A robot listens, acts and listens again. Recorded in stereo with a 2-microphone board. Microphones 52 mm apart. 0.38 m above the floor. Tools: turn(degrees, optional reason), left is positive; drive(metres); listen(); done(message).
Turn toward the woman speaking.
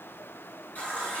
listen()
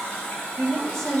turn(degrees=30)
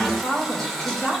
turn(degrees=140, reason="So it is at 140° left.")
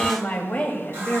turn(degrees=20, reason="The woman speaking is now 20° left.")
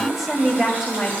done("Facing the woman speaking.")